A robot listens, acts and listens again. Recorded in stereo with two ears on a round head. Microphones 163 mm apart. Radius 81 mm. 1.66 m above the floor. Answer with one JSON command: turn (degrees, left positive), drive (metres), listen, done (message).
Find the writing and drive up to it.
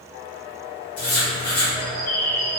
{"turn": 30}
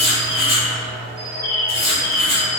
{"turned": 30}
{"turn": 120}
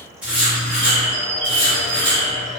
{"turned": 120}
{"turn": -10}
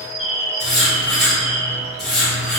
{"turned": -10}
{"drive": 1.0}
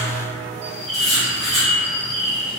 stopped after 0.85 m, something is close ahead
{"done": "I am next to the writing."}